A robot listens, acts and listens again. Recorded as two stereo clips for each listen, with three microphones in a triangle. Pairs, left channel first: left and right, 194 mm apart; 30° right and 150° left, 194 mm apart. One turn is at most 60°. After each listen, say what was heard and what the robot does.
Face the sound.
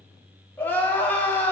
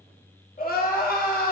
The crying: 10° left. Turn 10° left.
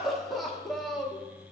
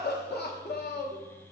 Found it: crying, straight ahead, 1 to 2 m away.